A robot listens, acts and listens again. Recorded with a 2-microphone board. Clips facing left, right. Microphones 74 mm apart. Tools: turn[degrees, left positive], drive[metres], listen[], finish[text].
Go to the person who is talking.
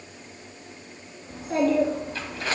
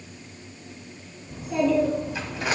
Thought: The child speaking: about 60° left or 120° left.
Action: turn[60]
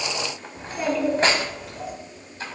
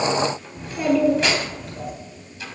Action: drive[1.0]
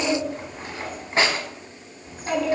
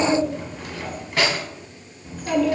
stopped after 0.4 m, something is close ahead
Action: finish[Something is in my way. I am facing the child speaking but have not reached it.]